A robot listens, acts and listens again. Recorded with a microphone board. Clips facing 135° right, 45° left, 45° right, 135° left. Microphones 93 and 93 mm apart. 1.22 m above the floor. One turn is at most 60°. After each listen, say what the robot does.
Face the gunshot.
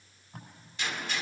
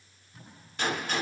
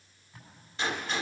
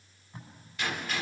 Turn 10° left.
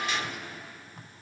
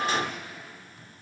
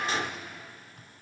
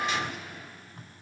Facing the gunshot, 1 to 2 m away.